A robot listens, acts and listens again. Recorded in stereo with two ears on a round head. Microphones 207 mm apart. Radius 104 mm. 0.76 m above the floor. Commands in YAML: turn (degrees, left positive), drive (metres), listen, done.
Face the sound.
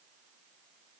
listen: true
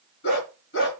turn: 55
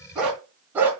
turn: -10
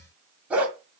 turn: -10
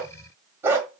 turn: -15
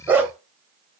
turn: -10
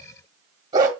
turn: -20
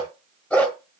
done: "Facing the dog barking."